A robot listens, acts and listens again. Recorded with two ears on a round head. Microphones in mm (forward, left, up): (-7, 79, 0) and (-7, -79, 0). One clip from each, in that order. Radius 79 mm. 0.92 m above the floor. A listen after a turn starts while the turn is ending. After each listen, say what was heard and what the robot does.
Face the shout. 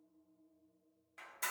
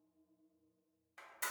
Keep listening.
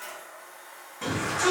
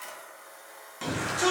The shout: about 65° right or 115° right. Turn 65° right.
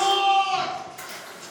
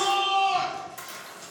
So it is at 35° right. Turn 35° right.
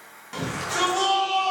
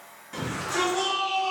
The shout is now 25° left. Turn 25° left.
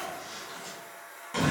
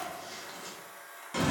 Facing the shout, 1 to 2 m away.